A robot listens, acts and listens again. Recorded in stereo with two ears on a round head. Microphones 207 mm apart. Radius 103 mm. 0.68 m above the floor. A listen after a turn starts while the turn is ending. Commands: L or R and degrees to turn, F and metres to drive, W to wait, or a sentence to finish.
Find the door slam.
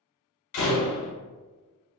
L60
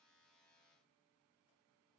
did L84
W
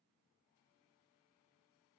I heard a door slam, but can't make it out now. It was about 20° right or 35° left.